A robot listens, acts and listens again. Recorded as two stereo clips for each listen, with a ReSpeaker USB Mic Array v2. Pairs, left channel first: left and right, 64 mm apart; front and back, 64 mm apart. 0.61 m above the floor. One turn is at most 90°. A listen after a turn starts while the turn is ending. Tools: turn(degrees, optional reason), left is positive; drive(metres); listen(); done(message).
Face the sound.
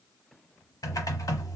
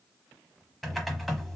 turn(degrees=85, reason="The typing on a keyboard: 85° left.")
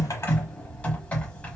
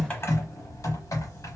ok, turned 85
turn(degrees=25, reason="The typing on a keyboard is now 25° left.")
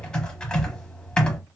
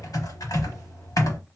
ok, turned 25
turn(degrees=15, reason="The typing on a keyboard is now 15° left.")
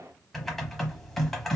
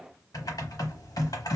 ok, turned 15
done("Found it: typing on a keyboard, straight ahead.")